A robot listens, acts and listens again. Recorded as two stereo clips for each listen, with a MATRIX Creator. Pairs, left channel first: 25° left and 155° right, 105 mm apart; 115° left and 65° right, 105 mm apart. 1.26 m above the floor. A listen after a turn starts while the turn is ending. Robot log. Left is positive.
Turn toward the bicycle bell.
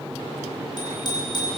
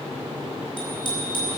note: The bicycle bell: 70° left.
cmd yaw +70
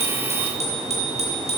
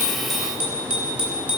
note: The bicycle bell is now 10° left.
cmd yaw +10
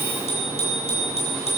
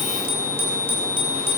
end: Found it: a bicycle bell, straight ahead, over 4 m away.